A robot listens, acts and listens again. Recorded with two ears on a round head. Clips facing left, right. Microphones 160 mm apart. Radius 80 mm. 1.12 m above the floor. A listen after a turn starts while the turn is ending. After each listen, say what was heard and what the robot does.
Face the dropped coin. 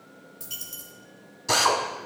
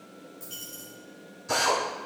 The dropped coin: about 45° left or 135° left. Turn 45° left.
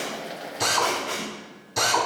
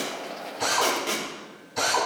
Keep listening.
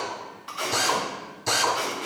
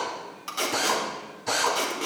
I heard a dropped coin, but can't make it out now. It was about straight ahead or 90° left.